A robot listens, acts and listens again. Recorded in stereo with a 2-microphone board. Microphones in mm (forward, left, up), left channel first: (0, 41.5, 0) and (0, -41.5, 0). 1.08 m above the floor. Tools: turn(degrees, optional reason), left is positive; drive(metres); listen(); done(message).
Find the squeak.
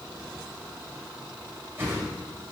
listen()
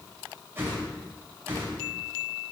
listen()
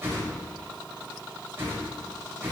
done("I can't make out a squeak, only a whoosh.")